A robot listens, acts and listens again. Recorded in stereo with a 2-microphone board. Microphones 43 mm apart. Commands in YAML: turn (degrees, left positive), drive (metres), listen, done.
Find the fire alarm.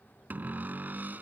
listen: true
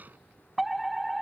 turn: 30
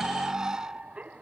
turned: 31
turn: -35
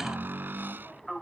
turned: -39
done: "Facing the fire alarm."